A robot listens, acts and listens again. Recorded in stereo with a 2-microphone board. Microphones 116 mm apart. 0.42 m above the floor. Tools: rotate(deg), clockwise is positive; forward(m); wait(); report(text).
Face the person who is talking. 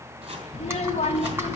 rotate(-65)
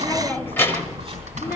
rotate(-20)
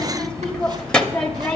rotate(-10)
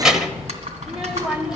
report("Facing the child speaking, under 1 m away.")